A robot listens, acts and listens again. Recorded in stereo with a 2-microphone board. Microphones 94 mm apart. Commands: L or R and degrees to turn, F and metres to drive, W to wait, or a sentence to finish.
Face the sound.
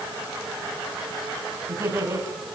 R30
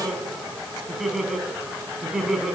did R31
Facing the laughter, over 4 m away.